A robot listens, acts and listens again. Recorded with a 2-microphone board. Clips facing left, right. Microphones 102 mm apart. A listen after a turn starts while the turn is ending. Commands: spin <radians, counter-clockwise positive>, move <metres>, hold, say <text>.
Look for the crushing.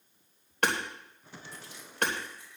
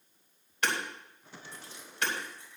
spin -0.52
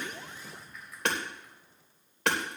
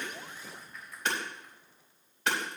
say Found it: crushing, straight ahead.